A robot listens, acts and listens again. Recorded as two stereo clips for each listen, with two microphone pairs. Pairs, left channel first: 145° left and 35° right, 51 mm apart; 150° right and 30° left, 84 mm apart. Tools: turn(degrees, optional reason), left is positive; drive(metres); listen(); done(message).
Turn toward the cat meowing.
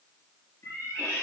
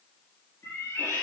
turn(degrees=160, reason="The cat meowing: 160° left.")
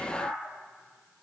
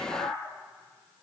done("Facing the cat meowing, 2 to 4 m away.")